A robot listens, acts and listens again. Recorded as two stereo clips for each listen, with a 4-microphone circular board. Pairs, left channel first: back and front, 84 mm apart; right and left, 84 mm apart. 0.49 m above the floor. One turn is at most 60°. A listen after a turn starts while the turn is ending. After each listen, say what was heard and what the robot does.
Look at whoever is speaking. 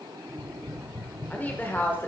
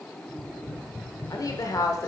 The woman speaking: 120° right. Turn 60° right.
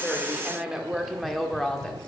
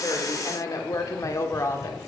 The woman speaking is now 110° right. Turn 60° right.
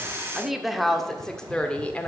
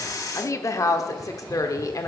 The woman speaking is now 115° right. Turn 60° right.
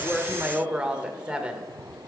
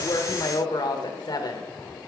The woman speaking is now 75° right. Turn 60° right.
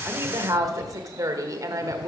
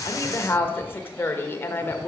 The woman speaking is now 30° right. Turn 30° right.
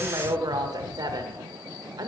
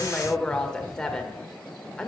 The woman speaking is now 10° right. Turn 10° right.
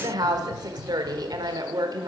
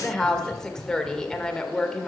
Facing the woman speaking, 1 to 2 m away.